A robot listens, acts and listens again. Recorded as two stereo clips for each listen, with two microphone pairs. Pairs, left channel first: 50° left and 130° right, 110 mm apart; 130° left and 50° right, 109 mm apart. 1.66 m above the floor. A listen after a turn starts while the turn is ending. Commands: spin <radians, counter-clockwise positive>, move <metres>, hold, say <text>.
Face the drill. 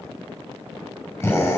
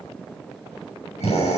spin 2.09
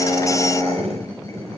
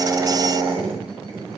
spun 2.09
spin -0.17
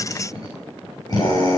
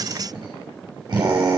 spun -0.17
say Facing the drill, over 4 m away.